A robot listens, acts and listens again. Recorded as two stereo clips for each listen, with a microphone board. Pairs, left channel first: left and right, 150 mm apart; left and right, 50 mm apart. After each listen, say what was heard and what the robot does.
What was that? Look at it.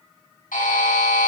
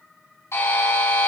The buzzer: about 70° left or 110° left. Turn 70° left.
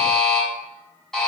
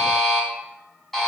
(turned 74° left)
Found it: a buzzer, straight ahead, over 4 m away.